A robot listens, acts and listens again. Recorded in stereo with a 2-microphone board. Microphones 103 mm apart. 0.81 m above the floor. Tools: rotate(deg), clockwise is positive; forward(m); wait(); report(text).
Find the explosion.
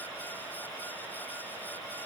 wait()
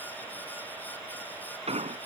rotate(90)
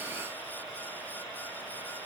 report("I heard an explosion from this way, but can't make it out now.")